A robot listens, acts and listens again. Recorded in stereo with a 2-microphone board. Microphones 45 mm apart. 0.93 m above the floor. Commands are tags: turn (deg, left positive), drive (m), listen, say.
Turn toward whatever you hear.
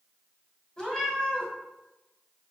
<turn deg="15"/>
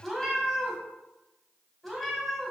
<say>Found it: a cat meowing, straight ahead, 1 to 2 m away.</say>